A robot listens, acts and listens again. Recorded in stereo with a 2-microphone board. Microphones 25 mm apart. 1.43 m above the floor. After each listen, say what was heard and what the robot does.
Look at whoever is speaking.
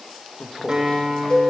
The man speaking: about 40° left or 140° left. Turn 40° left.
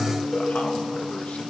Keep listening.
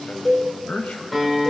So it is at 100° left. Turn 100° left.
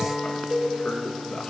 The man speaking is now 60° left. Turn 60° left.
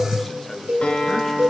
The man speaking is now 10° left. Turn 10° left.
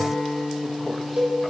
Keep listening.
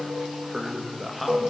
Found it: a man speaking, straight ahead.